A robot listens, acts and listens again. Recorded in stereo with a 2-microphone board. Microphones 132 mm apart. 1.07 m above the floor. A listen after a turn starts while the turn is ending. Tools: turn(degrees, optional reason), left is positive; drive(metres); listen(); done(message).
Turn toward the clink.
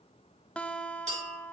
turn(degrees=-65, reason="The clink: about 65° right or 115° right.")
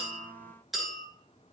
done("Facing the clink.")